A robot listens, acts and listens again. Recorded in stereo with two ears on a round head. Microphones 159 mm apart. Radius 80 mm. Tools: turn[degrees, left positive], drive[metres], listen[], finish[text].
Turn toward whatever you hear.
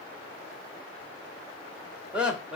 Action: turn[-30]
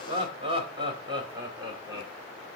Thought: So it is at 155° right.
Action: turn[-155]
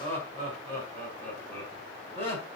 Thought: The laughter is now 15° left.
Action: turn[15]
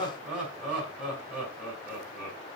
Action: finish[Found it: laughter, straight ahead, over 4 m away.]